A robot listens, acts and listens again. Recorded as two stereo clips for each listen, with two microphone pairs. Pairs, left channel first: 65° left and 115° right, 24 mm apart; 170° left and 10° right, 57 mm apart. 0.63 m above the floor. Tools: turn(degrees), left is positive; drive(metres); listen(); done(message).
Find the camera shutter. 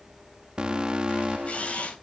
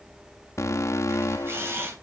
turn(degrees=35)
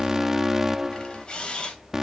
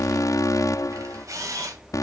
turn(degrees=15)
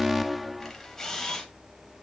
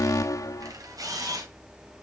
done("Found it: a camera shutter, straight ahead.")